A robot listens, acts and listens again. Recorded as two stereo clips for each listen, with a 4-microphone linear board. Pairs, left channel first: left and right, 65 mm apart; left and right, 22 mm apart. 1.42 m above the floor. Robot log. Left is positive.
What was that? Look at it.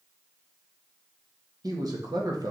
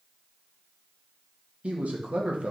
cmd yaw -90
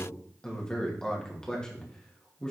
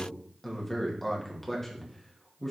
note: So it is at 10° left.
cmd yaw +10
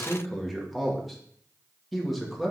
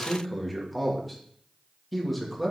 end: Found it: a man speaking, straight ahead, 2 to 4 m away.